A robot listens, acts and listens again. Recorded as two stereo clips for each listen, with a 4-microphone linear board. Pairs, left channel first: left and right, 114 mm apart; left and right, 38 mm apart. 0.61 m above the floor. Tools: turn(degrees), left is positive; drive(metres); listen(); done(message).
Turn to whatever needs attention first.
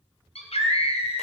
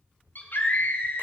turn(degrees=65)
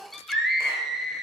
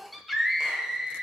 done("Facing the scream, 2 to 4 m away.")